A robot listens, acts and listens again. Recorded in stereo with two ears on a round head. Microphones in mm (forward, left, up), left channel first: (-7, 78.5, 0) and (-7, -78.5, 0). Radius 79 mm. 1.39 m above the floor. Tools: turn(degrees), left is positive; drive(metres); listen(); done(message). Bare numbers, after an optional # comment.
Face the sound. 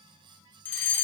turn(30)
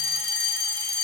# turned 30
# So it is at 20° right.
turn(-20)
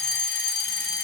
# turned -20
done("Found it: a fire alarm, straight ahead.")